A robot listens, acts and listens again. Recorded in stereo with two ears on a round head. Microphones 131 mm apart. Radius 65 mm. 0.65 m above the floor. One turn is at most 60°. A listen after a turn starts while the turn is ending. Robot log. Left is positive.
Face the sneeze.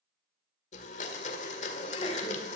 note: The sneeze: about 40° left or 140° left.
cmd yaw +40
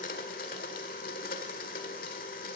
cmd idle
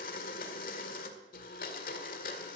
end: I heard a sneeze, but can't make it out now. It was about straight ahead or 100° left.